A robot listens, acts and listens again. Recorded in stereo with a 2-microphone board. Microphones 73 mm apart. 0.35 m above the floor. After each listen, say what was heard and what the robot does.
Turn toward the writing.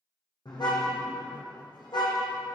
Keep listening.
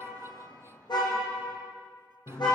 Keep listening.
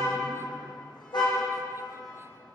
I can't make out writing to turn to.